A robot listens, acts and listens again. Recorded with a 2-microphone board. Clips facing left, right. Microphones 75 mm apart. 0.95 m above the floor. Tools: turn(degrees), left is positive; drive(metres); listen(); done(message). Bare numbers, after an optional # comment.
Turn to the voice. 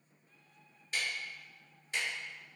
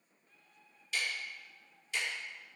listen()
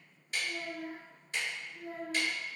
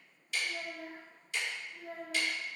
turn(30)
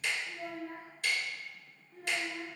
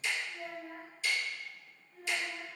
# So it is at 150° left.
turn(150)
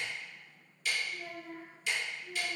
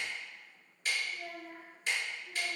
done("Facing the child speaking, 1 to 2 m away.")